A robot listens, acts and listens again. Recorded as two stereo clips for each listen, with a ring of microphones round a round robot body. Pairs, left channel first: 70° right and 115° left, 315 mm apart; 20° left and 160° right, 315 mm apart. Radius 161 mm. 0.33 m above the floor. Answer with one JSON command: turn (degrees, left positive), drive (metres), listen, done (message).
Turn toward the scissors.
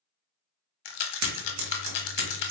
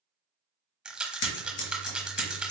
{"turn": 75}
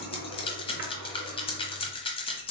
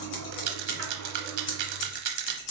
{"done": "Facing the scissors, 1 to 2 m away."}